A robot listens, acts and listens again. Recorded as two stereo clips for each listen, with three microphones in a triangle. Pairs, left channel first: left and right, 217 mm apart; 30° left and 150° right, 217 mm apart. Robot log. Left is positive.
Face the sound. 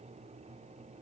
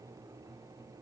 cmd idle
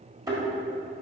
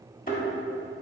note: The thud: 20° right.
cmd yaw -20
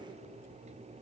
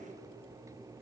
end: I heard a thud from this way, but can't make it out now.